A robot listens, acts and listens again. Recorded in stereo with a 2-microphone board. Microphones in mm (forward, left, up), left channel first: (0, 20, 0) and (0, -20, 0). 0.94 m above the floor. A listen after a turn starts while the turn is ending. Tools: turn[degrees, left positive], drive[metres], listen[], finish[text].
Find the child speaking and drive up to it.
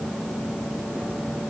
Action: listen[]
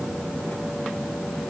Action: listen[]
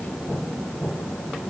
Action: finish[I can't make out a child speaking.]